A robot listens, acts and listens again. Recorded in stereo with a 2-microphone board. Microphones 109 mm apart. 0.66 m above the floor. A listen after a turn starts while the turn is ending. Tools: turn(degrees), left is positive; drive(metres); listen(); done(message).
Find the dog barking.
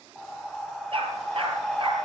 turn(degrees=-55)
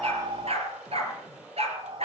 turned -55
turn(degrees=-70)
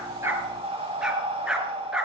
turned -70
done("Facing the dog barking.")